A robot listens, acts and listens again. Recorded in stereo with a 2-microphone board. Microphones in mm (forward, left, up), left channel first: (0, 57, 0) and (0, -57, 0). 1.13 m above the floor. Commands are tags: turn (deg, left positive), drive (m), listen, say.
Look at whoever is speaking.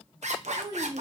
<turn deg="-35"/>
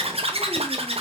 <listen/>
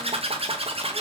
<listen/>
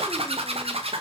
<say>I heard a child speaking, but can't make it out now. It was about straight ahead or 110° right.</say>